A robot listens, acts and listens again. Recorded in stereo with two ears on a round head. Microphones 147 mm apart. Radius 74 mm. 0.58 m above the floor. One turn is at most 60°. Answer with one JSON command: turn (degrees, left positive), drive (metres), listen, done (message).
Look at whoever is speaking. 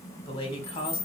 {"turn": 35}
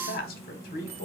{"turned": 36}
{"turn": 60}
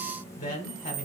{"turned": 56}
{"turn": 50}
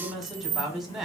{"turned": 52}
{"done": "Facing the man speaking, 1 to 2 m away."}